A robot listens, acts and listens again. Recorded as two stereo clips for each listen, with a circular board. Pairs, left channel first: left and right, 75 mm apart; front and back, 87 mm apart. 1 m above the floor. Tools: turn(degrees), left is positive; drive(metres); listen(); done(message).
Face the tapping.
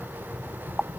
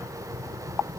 listen()
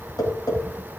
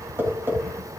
turn(degrees=115)
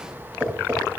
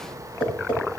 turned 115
turn(degrees=-20)
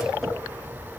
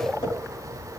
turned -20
listen()
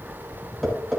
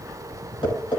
done("Facing the tapping, over 4 m away.")